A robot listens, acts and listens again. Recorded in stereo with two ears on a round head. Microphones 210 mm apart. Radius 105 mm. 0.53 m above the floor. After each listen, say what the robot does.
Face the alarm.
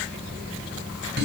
Keep listening.
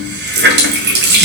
Keep listening.
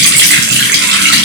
I can't make out an alarm to turn to.